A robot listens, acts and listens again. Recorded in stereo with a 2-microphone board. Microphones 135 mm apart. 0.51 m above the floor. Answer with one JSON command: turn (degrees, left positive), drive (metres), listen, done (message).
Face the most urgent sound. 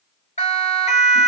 {"turn": 55}
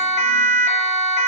{"turn": 65}
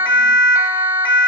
{"turn": -15}
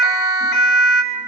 {"done": "Found it: a siren, straight ahead, over 4 m away."}